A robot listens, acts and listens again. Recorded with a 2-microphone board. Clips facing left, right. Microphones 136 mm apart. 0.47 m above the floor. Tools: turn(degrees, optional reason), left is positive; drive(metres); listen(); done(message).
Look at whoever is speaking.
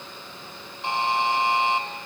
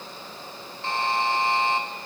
listen()
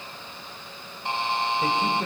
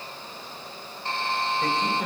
turn(degrees=30)
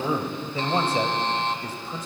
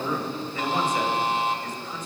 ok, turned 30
turn(degrees=140, reason="So it is at 140° left.")
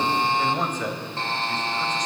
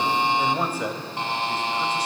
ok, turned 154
turn(degrees=-10, reason="The man speaking is now 10° right.")
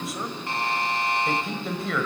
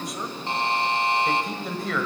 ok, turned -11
done("Facing the man speaking, 1 to 2 m away.")